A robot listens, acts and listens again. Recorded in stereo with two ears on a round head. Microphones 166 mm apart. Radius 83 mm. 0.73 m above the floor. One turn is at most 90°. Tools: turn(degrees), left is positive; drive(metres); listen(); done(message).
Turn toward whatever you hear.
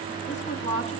turn(degrees=35)
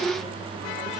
listen()
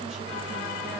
listen()
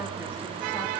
done("I heard a woman speaking, but can't make it out now. It was about straight ahead or 110° left.")